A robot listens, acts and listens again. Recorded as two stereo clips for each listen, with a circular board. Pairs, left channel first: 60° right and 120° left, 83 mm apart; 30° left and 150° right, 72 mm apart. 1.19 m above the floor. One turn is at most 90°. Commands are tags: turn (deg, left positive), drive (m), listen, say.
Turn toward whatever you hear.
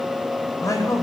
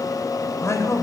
<turn deg="-15"/>
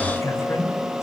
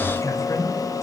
<turn deg="-10"/>
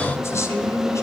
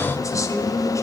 <turn deg="-10"/>
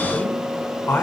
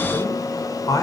<say>Facing the man speaking.</say>